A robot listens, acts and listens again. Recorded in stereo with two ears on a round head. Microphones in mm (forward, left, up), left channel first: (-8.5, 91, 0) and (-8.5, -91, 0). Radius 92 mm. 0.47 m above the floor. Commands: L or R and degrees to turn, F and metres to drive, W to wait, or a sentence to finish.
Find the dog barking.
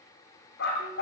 L55
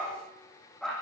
Facing the dog barking, over 4 m away.